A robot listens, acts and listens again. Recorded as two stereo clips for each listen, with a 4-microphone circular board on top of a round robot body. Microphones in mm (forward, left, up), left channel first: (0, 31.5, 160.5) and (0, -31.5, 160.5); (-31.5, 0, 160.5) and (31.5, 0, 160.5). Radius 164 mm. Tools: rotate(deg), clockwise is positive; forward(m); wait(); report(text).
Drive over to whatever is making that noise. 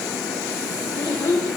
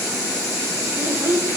rotate(-60)
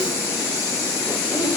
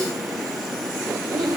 wait()
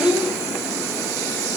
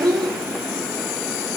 rotate(20)
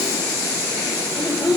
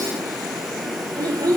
forward(1.0)
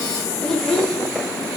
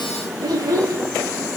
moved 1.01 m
rotate(-10)
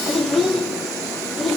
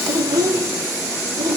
forward(1.0)
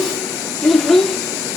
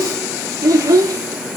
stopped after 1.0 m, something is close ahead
report("I am next to the child speaking.")